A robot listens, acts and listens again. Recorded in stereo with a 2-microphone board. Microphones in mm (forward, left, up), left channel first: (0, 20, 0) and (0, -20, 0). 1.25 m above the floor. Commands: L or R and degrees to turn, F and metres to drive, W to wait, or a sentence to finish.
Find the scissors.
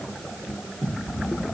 W
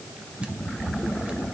W
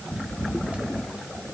I can't make out scissors to turn to.